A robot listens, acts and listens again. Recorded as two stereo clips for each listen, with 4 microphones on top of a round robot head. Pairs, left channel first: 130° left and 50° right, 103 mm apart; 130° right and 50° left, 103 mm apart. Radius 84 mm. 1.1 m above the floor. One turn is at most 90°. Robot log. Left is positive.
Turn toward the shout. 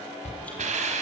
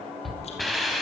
note: The shout: 140° left.
cmd yaw +90
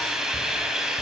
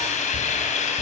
note: Nothing new. It was at 50° left.
cmd yaw +50
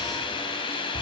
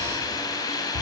cmd idle
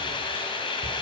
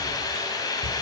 end: Facing where the shout came from. I can't hear it now.